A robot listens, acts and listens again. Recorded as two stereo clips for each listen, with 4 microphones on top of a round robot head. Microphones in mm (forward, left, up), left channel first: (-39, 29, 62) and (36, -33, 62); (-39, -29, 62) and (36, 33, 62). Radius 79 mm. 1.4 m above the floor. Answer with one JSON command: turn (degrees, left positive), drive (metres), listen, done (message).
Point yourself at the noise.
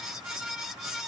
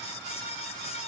{"listen": true}
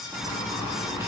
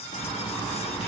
{"turn": -105}
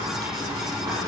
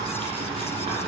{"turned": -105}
{"turn": 10}
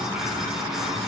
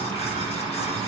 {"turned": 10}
{"done": "Facing the boiling."}